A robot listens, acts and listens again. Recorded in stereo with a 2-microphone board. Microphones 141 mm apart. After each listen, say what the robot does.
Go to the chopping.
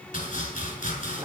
Turn 65° left.
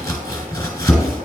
Turn 20° left.
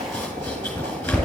Turn 10° left.
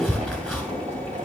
Drive 1.0 m forward.
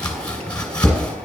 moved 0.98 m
Turn 10° left.
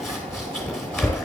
Drive 1.0 m forward.
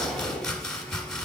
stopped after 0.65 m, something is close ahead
Arrived at the chopping, straight ahead.